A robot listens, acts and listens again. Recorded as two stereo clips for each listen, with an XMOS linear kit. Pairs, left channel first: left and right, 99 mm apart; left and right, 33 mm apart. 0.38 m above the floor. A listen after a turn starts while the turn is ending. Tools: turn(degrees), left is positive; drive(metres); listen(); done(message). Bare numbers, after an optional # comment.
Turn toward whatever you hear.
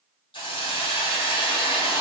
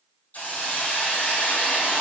# The hiss: about 60° left or 120° left.
turn(60)
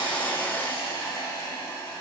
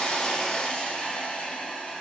# So it is at 45° left.
turn(45)
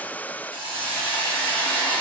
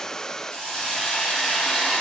# The hiss is now 20° left.
turn(20)
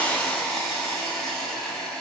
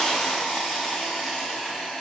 done("Found it: a hiss, straight ahead, 1 to 2 m away.")